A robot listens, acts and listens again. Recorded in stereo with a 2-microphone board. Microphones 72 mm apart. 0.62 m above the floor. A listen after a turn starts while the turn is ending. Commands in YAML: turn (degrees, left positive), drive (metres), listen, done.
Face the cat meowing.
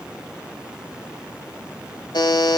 listen: true
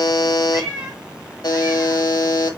turn: -30
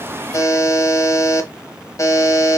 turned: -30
listen: true
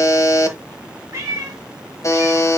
turn: -145
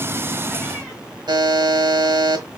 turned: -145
listen: true
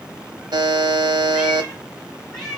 done: "Facing the cat meowing, 2 to 4 m away."